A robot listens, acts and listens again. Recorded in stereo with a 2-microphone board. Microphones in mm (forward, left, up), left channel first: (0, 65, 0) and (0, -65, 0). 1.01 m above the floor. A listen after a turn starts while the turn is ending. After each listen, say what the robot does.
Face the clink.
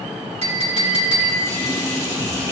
Turn 60° right.
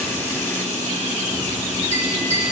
Turn 55° right.
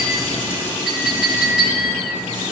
Facing the clink, 2 to 4 m away.